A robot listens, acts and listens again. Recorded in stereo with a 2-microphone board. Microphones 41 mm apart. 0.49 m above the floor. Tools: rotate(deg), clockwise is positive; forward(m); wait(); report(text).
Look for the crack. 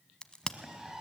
rotate(-20)
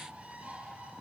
wait()
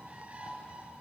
report("I heard a crack, but can't make it out now. It was about straight ahead or 140° left.")